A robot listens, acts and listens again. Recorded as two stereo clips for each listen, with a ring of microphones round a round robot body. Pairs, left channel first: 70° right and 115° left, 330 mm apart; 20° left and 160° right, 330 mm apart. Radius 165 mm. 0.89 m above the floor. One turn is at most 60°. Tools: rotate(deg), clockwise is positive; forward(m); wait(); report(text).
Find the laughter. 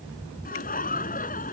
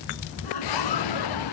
report("Facing the laughter.")